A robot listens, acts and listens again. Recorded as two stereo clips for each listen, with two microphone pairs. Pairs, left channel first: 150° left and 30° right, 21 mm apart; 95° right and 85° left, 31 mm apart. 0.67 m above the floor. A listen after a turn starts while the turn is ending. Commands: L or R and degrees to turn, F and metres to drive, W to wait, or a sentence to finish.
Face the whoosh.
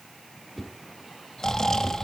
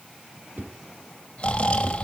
L70
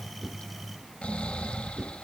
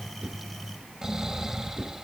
L15
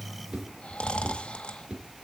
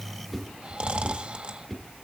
Found it: a whoosh, straight ahead.